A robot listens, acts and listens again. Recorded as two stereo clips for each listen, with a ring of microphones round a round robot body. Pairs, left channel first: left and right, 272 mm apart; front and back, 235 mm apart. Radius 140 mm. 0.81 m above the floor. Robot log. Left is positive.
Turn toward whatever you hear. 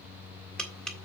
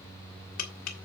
end: Facing the tapping, 2 to 4 m away.